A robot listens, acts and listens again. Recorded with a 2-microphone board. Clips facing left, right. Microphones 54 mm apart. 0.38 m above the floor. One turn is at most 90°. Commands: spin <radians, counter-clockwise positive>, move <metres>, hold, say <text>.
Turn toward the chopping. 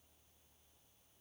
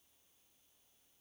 hold
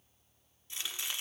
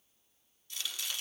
spin 0.52
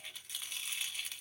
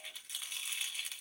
say Facing the chopping.